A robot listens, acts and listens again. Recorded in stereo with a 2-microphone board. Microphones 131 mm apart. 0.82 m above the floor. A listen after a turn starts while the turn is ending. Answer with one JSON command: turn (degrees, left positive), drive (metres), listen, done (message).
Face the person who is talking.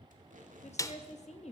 {"turn": 60}
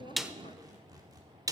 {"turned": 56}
{"listen": true}
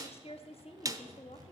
{"turn": 55}
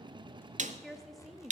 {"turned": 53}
{"done": "Facing the woman speaking, 1 to 2 m away."}